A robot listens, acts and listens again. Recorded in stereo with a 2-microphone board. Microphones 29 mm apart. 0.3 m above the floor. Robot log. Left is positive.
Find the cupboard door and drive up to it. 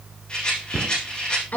note: The cupboard door: about 60° right or 120° right.
cmd yaw -60
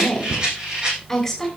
note: So it is at 60° right.
cmd yaw -60
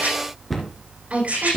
cmd fwd 1.0
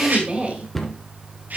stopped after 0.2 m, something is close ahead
end: Something is in my way. I am facing the cupboard door but have not reached it.